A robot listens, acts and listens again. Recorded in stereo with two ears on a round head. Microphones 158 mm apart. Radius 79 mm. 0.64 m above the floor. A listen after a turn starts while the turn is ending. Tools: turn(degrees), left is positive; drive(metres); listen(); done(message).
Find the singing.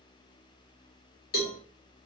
listen()
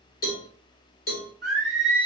turn(degrees=30)
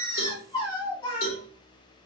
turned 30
turn(degrees=150)
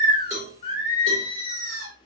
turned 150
turn(degrees=40)
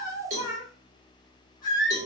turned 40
turn(degrees=25)
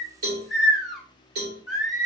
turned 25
done("Facing the singing, 1 to 2 m away.")